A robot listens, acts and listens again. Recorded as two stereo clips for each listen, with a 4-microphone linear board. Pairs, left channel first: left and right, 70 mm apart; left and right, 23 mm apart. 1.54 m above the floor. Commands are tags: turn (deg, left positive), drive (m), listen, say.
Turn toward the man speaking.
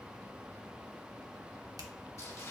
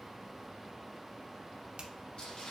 <listen/>
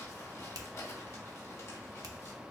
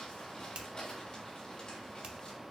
<listen/>
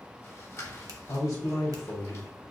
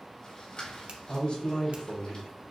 <turn deg="55"/>
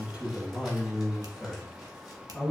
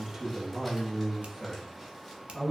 <say>Facing the man speaking.</say>